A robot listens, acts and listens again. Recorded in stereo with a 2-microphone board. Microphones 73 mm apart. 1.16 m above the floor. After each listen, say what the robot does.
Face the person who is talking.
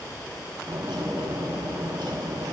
Keep listening.
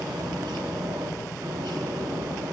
Keep listening.
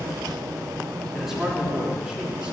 Turn 30° right.
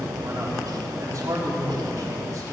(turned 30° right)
Turn 135° right.
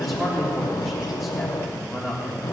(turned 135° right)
Found it: a man speaking, straight ahead, 2 to 4 m away.